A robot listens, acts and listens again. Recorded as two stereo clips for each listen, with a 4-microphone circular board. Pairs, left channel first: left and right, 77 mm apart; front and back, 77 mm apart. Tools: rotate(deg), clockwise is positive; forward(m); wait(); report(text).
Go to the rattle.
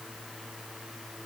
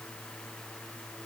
wait()
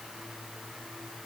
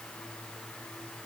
wait()
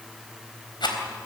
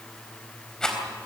rotate(-80)
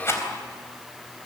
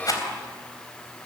rotate(-35)
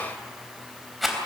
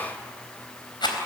forward(1.0)
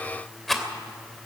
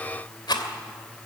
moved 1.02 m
forward(1.0)
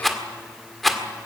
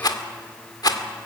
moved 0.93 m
forward(1.0)
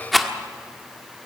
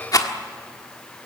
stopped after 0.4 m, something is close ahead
report("I am next to the rattle.")